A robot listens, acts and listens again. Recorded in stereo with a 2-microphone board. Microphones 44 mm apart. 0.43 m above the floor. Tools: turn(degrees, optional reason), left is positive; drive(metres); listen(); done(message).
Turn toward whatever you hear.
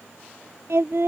turn(degrees=-90)
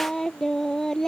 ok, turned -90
turn(degrees=10, reason="So it is at 10° left.")
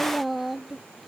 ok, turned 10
done("Found it: singing, straight ahead.")